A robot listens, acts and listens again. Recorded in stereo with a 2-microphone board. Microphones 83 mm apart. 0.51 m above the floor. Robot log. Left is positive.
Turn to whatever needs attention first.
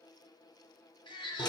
cmd yaw +90
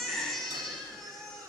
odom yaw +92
end: Found it: a baby crying, straight ahead.